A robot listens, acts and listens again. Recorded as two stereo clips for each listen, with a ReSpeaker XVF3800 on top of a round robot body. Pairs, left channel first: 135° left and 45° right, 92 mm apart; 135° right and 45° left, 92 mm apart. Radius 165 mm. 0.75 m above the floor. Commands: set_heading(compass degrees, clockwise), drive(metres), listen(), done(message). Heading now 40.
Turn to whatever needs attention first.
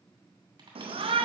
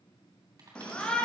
set_heading(95)
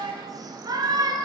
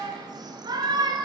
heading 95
done("Facing the shout, under 1 m away.")